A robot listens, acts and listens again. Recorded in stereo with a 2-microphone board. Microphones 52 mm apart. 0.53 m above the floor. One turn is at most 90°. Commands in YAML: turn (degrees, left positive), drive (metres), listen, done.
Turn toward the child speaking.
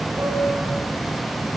listen: true
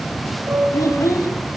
turn: 90
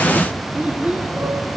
turn: -25
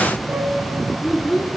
done: "Facing the child speaking."